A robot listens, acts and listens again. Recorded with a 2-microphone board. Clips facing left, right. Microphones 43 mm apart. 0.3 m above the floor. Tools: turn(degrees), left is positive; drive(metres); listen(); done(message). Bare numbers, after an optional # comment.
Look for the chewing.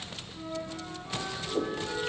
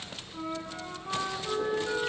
listen()
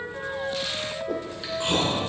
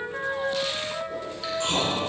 # The chewing: about 15° left or 165° left.
turn(15)
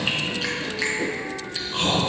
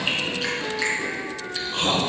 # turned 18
done("Facing the chewing.")